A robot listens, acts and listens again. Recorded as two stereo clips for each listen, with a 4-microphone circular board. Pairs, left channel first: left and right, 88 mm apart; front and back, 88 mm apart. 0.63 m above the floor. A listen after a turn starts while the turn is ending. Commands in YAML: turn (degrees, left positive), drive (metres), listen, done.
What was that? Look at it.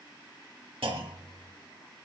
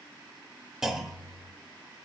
turn: -95
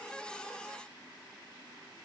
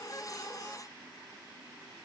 done: "I heard a clunk from this way, but can't make it out now."